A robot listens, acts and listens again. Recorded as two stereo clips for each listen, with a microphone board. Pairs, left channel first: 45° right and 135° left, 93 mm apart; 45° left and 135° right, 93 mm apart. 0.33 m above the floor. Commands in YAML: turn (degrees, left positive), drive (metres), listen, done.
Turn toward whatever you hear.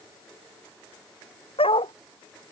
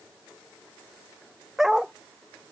turn: -50
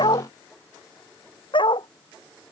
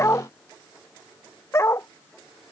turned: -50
turn: -15
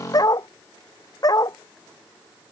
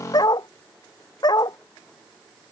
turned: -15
done: "Facing the dog barking."